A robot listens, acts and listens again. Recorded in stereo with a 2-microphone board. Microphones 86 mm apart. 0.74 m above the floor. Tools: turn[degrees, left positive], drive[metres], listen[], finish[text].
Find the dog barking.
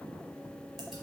Action: listen[]
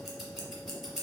Action: listen[]
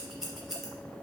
Action: finish[I can't make out a dog barking, only scissors.]